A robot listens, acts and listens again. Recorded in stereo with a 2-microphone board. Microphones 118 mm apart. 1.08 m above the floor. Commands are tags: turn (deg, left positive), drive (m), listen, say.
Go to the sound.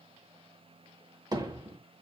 <turn deg="-35"/>
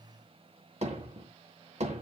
<turn deg="-110"/>
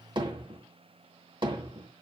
<turn deg="-45"/>
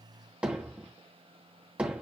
<turn deg="-10"/>
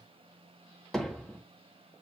<drive m="1.0"/>
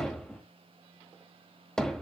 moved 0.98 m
<drive m="1.0"/>
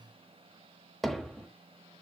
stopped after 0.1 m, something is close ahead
<say>I am next to the hammering.</say>